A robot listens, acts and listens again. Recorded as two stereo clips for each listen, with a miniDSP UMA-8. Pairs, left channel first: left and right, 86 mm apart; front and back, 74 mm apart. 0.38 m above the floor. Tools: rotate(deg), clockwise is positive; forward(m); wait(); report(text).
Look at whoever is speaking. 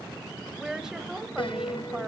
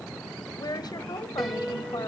rotate(10)
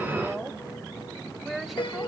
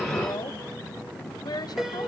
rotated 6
report("Found it: a woman speaking, straight ahead, 1 to 2 m away.")